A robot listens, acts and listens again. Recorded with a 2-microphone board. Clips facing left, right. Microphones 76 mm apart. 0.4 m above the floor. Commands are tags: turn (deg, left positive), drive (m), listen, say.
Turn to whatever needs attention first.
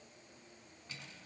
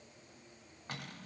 <listen/>
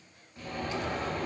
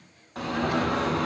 <turn deg="-70"/>
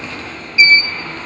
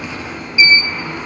<turn deg="-15"/>
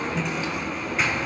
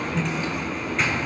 <say>Facing the alarm.</say>